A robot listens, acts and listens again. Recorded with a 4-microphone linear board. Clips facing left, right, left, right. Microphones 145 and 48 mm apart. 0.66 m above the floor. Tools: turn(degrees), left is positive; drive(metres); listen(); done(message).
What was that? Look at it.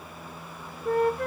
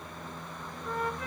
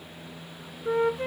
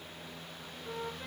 turn(degrees=65)
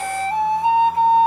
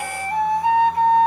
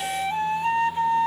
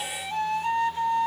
turn(degrees=25)
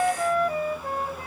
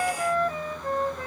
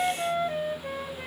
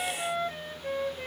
turn(degrees=10)
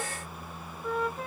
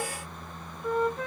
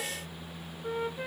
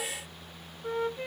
done("Found it: a flute, straight ahead.")